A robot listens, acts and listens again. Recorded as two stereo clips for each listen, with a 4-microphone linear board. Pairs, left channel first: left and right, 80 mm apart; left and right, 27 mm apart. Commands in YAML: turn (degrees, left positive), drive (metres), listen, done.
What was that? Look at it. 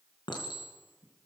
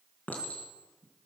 turn: 65
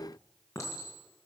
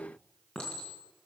turn: 40
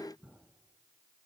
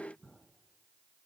done: "Facing the clink, 2 to 4 m away."